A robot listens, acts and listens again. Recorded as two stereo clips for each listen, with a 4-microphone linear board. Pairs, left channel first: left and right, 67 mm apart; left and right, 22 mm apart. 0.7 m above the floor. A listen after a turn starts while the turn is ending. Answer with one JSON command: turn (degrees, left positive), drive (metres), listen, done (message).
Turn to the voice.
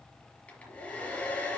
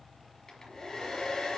{"listen": true}
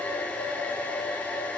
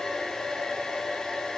{"listen": true}
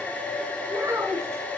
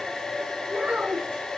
{"turn": -50}
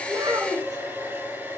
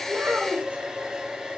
{"turn": -80}
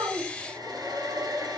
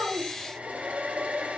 {"listen": true}
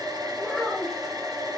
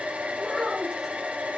{"done": "Facing the child speaking."}